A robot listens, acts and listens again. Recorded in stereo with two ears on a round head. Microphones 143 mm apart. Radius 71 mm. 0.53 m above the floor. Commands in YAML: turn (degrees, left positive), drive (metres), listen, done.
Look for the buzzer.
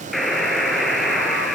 turn: 30
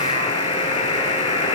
turn: 145
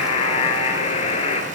turn: 35
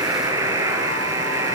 turn: -20
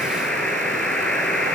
done: "Facing the buzzer, over 4 m away."